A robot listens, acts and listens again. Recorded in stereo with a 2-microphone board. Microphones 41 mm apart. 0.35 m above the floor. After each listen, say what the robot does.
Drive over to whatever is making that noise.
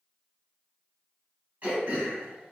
Turn 50° right.
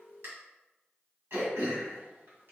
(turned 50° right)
Turn 75° right.
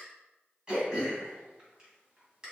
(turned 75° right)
Turn 20° right.
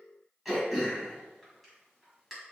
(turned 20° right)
Drive 1.0 m forward.
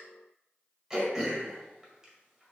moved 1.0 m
Turn 15° right.
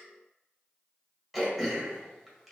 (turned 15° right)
Drive 1.0 m forward.
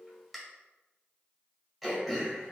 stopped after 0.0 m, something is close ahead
Arrived at the throat clearing, straight ahead.